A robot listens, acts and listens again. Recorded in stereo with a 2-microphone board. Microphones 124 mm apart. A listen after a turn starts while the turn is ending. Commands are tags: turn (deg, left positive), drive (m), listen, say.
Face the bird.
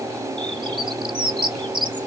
<turn deg="-40"/>
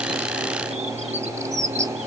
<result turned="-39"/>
<turn deg="-95"/>
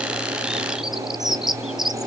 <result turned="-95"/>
<say>Found it: a bird, straight ahead.</say>